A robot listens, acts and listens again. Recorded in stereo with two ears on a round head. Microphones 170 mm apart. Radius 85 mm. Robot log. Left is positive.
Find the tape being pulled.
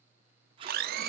note: The tape being pulled: about 25° right or 155° right.
cmd yaw -25
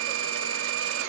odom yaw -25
cmd idle
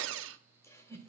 cmd idle
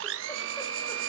end: I heard tape being pulled, but can't make it out now. It was about straight ahead or 130° right.